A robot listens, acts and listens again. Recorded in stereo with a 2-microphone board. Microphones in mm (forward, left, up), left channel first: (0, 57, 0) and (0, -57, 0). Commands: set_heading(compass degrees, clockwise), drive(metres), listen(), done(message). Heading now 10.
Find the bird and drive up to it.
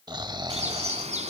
set_heading(100)
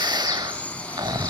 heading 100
set_heading(85)
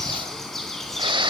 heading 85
drive(1.0)
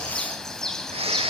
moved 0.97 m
drive(1.0)
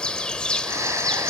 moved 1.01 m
set_heading(75)
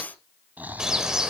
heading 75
drive(1.0)
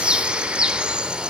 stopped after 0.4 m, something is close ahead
set_heading(85)
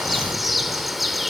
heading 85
done("Arrived at the bird, straight ahead.")